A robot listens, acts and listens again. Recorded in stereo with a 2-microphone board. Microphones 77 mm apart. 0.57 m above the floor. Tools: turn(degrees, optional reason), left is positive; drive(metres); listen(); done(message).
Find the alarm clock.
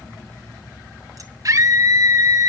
listen()
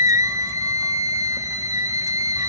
listen()
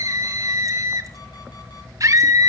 done("I can't make out an alarm clock, only a scream.")